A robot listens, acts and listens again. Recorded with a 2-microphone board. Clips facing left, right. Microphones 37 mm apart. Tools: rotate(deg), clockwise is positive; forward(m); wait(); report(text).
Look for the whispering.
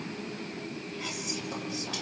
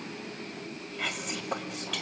rotate(50)
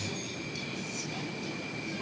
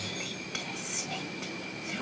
rotate(80)
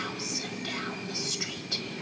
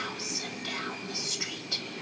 report("Found it: whispering, straight ahead.")